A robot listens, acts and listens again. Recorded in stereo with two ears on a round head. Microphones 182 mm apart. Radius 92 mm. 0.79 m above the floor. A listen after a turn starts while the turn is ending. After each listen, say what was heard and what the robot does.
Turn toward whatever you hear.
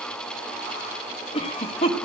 The cough: about 30° left or 150° left. Turn 30° left.
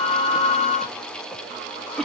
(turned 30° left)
Found it: a cough, straight ahead.